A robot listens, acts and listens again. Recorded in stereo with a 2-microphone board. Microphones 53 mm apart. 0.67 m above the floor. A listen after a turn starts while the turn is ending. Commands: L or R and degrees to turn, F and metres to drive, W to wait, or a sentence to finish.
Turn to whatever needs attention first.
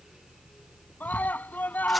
L30
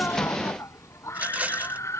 L120
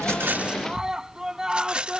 R10
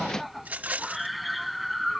Found it: a scream, straight ahead.